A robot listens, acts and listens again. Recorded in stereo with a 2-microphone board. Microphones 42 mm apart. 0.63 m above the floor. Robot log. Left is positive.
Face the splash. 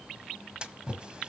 note: The splash: about 20° right or 160° right.
cmd yaw -20
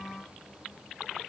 cmd idle
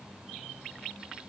end: I heard a splash, but can't make it out now. It was about straight ahead or 140° right.